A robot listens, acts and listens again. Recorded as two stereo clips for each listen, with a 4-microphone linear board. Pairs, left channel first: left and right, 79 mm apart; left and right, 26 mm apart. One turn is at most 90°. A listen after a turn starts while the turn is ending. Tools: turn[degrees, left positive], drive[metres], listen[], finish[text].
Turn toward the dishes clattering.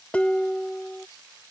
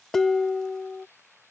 Action: turn[30]
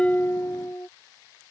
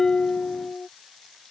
Thought: So it is at 130° left.
Action: turn[90]
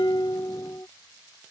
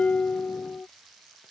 Thought: The dishes clattering is now 50° left.
Action: turn[50]
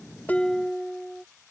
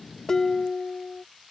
Action: finish[Found it: dishes clattering, straight ahead.]